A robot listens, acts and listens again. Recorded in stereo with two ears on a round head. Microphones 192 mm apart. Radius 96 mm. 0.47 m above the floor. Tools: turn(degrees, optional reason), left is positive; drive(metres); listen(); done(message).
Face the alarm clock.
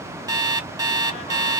turn(degrees=-20, reason="The alarm clock: about 20° right or 160° right.")
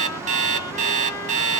turn(degrees=-140, reason="So it is at 140° right.")
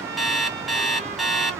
done("Found it: an alarm clock, straight ahead.")